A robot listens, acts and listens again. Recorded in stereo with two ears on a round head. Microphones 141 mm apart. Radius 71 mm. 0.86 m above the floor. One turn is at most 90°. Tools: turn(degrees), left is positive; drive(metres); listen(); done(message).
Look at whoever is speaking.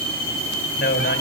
turn(degrees=60)
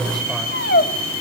listen()
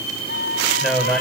done("Found it: a man speaking, straight ahead, over 4 m away.")